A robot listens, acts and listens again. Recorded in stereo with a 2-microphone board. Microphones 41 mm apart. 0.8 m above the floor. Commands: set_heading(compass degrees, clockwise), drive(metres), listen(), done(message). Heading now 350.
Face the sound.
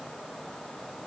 listen()
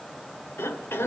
set_heading(260)
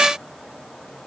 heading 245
set_heading(260)
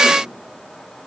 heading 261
listen()
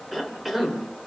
done("Facing the cough, 2 to 4 m away.")